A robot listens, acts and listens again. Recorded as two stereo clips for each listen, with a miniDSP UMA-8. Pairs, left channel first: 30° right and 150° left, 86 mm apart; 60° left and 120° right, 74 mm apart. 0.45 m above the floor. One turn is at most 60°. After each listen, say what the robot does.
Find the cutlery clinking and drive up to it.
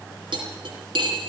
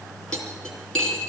Turn 60° left.
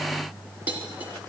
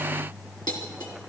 Turn 60° left.
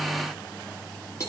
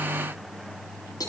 Turn 25° left.
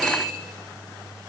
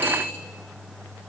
Drive 1.0 m forward.
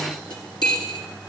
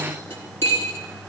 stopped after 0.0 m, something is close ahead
Blocked. The cutlery clinking is further on, straight ahead.